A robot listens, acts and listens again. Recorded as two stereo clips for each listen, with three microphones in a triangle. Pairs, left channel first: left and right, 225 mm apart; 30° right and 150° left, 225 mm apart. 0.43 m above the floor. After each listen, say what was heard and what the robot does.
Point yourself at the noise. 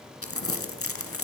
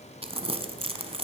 The crumpling: 90° left. Turn 90° left.
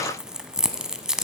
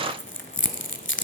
Facing the crumpling.